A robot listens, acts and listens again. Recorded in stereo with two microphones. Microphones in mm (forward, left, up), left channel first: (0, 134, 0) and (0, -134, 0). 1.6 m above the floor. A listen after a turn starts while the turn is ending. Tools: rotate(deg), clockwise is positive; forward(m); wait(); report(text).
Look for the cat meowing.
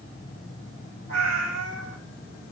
rotate(-40)
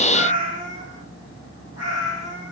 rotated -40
rotate(-115)
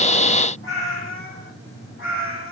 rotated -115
rotate(-50)
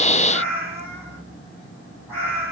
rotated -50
rotate(-10)
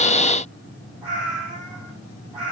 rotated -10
report("Facing the cat meowing, over 4 m away.")